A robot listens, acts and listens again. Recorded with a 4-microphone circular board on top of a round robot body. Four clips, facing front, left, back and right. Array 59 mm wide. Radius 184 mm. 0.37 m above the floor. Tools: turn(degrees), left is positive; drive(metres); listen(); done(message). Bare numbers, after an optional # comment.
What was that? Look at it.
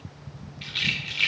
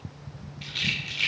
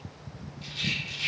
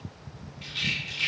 # The rattle: 15° left.
turn(15)
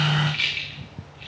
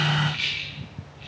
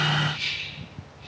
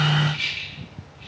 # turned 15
done("Found it: a rattle, straight ahead, 1 to 2 m away.")